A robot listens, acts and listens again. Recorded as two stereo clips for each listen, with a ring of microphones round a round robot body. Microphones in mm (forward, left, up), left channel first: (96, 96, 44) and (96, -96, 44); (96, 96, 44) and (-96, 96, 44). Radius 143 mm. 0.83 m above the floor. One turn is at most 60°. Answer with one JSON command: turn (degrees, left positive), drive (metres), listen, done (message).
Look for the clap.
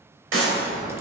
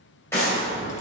{"turn": -60}
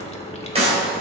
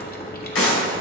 {"turn": -30}
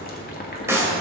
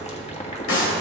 {"turn": -15}
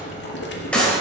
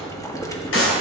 {"done": "Found it: a clap, straight ahead."}